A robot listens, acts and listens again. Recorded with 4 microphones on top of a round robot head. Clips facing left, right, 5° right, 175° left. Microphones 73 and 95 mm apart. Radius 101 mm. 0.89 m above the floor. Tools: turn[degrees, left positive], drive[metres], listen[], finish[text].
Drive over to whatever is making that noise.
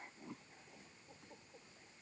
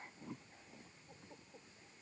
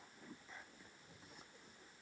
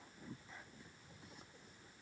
Action: listen[]
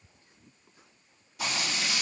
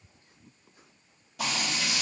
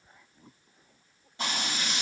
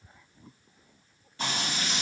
Thought: The frying: 75° right.
Action: turn[-75]
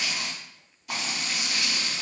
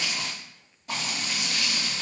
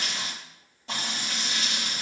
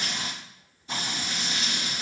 Thought: The frying is now 25° right.
Action: turn[-25]
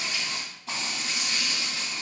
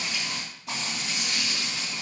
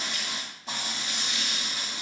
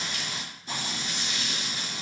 Action: drive[1.0]
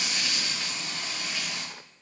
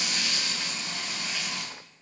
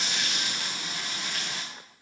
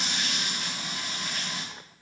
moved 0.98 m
Thought: The frying is now 10° left.
Action: turn[10]
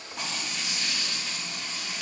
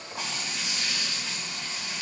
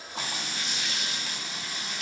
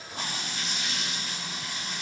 Action: drive[1.0]
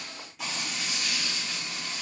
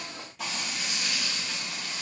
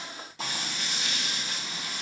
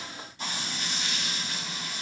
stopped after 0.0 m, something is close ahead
Action: finish[I am next to the frying.]